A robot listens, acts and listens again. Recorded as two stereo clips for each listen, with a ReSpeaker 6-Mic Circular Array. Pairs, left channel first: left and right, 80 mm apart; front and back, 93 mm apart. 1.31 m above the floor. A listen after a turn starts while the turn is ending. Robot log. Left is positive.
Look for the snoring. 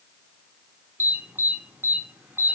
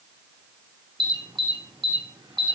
cmd idle
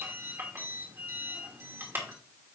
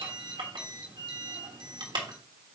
cmd idle
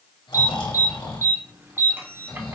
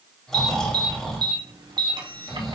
note: The snoring: 85° left.
cmd yaw +85
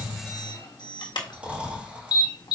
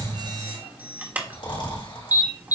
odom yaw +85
note: The snoring is now 15° right.
cmd yaw -15
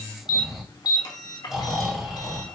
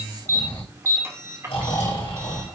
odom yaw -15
end: Facing the snoring, 2 to 4 m away.